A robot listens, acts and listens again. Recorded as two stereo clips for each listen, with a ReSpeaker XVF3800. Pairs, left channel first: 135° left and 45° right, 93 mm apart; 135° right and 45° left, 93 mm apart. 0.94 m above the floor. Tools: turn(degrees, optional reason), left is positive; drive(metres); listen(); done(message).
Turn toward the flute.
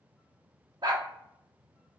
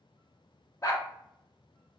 listen()
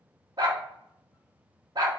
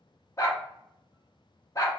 listen()
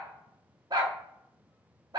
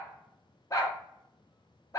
done("I can't make out a flute, only a dog barking.")